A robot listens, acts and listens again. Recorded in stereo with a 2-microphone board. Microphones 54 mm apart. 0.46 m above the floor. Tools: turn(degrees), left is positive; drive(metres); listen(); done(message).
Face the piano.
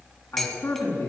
listen()
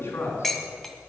listen()
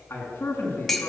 done("I can't make out a piano, only dishes clattering and a man speaking.")